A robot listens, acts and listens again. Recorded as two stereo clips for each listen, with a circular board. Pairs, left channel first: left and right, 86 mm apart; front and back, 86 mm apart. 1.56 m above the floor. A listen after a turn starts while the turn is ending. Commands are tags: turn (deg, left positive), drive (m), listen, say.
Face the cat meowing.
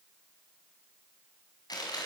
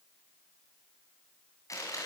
<listen/>
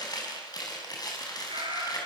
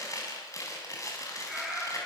<turn deg="-95"/>
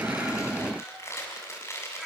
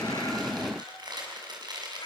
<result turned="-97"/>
<say>Facing the cat meowing.</say>